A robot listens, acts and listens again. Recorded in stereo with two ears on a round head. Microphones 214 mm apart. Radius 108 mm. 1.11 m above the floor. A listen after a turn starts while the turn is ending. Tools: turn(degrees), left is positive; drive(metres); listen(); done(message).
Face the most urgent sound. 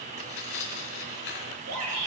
turn(degrees=-90)
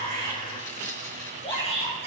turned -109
turn(degrees=25)
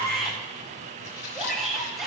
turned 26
done("Facing the shout, over 4 m away.")